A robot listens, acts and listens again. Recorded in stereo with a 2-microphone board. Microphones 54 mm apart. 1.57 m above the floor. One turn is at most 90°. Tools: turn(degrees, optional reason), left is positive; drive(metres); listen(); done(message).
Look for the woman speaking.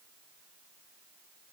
listen()
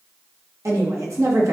turn(degrees=-70, reason="The woman speaking: about 70° right or 110° right.")
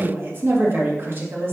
turn(degrees=-40, reason="So it is at 40° right.")
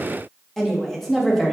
done("Facing the woman speaking, 2 to 4 m away.")